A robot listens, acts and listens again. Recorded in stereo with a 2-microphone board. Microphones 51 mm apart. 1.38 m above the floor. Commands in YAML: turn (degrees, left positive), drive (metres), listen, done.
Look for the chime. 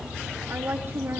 listen: true
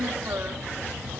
listen: true
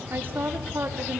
done: "I can't make out a chime to turn to."